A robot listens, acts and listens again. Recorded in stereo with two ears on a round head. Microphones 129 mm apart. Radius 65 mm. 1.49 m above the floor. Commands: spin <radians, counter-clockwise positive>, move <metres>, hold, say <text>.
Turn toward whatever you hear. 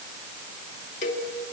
spin 0.96
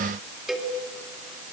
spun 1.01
say Found it: a cowbell, straight ahead, 2 to 4 m away.